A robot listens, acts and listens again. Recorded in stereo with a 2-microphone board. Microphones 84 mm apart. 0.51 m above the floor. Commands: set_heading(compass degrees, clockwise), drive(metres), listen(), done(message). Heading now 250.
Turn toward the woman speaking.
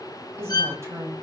set_heading(285)
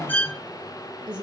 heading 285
set_heading(35)
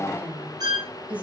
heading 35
set_heading(50)
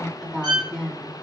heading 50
done("Facing the woman speaking, over 4 m away.")